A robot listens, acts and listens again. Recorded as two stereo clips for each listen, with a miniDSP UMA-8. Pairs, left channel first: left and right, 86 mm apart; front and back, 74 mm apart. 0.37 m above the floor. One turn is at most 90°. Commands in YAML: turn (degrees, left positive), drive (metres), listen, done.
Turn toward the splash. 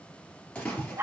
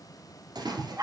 turn: 90
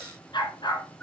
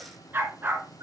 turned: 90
turn: 80
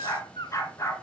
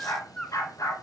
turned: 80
done: "Facing where the splash came from. I can't hear it now."